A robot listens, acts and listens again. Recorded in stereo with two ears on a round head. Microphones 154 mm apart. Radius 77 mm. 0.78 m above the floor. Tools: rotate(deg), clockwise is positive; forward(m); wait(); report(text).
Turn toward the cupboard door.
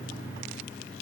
wait()
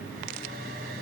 wait()
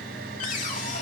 rotate(-50)
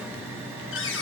rotate(-80)
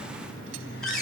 report("Facing the cupboard door, over 4 m away.")